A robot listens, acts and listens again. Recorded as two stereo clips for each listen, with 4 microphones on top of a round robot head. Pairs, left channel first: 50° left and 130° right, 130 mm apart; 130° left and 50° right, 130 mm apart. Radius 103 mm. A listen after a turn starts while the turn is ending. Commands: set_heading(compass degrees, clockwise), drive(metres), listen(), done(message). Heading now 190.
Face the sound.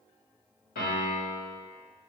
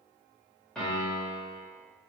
set_heading(145)
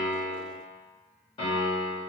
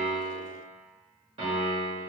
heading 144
done("Facing the piano, 1 to 2 m away.")